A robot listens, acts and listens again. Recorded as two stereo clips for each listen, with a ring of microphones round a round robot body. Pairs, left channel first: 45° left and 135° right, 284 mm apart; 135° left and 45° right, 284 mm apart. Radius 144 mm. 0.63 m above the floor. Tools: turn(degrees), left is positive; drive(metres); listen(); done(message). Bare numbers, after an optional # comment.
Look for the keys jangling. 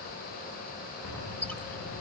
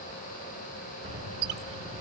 # The keys jangling: 20° left.
turn(20)
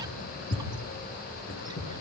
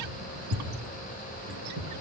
done("Facing the keys jangling.")